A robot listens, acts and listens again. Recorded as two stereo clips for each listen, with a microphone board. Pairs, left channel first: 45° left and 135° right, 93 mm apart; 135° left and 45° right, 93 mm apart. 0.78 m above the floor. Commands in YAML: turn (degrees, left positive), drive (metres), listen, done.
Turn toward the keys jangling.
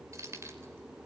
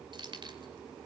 turn: -75
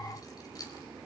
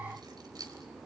done: "Found it: keys jangling, straight ahead."